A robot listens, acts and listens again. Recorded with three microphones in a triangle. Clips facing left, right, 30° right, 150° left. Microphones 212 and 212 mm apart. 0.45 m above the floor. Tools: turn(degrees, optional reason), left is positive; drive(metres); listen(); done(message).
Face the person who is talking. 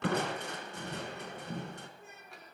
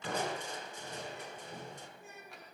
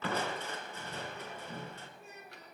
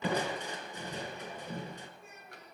turn(degrees=25, reason="The child speaking: 25° left.")
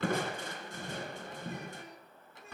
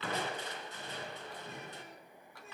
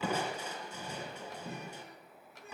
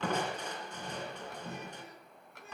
listen()
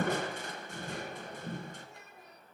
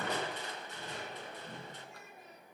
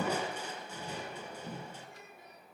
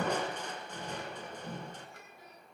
done("Found it: a child speaking, straight ahead, over 4 m away.")